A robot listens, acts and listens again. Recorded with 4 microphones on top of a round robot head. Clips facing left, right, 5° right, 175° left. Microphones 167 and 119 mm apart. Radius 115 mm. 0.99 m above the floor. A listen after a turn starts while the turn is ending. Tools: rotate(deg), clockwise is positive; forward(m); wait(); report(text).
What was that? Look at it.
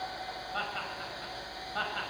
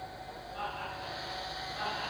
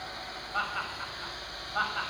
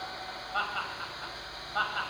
rotate(-90)
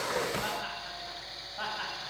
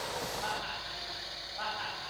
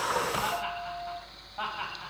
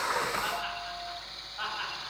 rotate(-35)
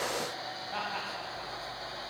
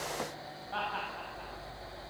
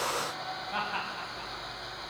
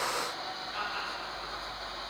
rotate(-10)
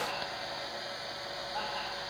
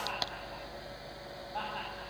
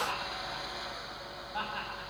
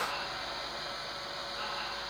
report("Facing the laughter, over 4 m away.")